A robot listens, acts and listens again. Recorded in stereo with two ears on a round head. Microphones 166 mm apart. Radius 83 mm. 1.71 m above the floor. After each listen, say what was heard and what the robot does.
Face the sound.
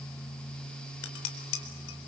Turn 90° left.
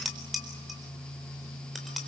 Found it: dishes clattering, straight ahead.